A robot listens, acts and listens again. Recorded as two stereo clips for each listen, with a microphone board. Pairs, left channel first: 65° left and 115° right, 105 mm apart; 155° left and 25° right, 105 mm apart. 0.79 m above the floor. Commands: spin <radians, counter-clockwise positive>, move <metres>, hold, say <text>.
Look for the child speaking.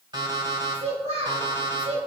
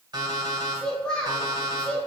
spin -2.18
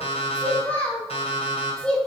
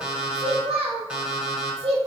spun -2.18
spin -0.26
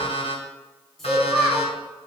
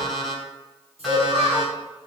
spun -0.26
spin -0.44
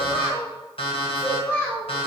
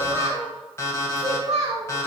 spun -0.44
say Found it: a child speaking, straight ahead.